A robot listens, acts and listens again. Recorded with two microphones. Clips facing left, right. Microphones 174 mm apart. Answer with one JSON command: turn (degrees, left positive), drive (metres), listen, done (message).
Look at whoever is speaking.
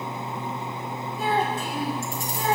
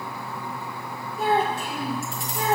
{"turn": -75}
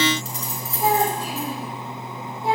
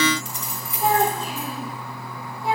{"turn": 25}
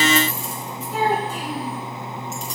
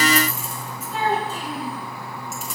{"turn": 15}
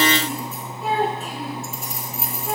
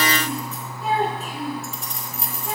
{"done": "Found it: a child speaking, straight ahead."}